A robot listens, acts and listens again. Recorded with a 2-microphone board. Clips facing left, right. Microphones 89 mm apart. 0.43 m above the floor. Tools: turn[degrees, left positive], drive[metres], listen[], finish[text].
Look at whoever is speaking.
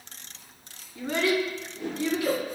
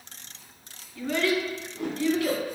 Thought: The child speaking: about 20° left or 160° left.
Action: turn[20]
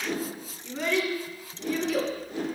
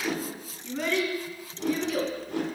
Action: finish[Facing the child speaking, 1 to 2 m away.]